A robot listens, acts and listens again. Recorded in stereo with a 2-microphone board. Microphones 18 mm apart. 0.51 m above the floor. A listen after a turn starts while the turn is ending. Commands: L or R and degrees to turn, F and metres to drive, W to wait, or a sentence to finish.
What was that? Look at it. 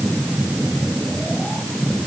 W
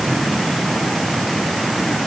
W
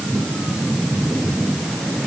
I can't make out anything.